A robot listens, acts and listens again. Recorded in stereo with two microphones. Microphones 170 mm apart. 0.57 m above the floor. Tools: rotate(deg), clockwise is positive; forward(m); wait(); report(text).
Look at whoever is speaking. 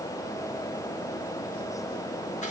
wait()
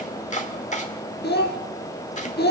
rotate(-75)
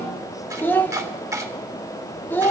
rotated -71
rotate(-10)
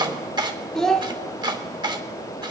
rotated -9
report("Found it: a child speaking, straight ahead.")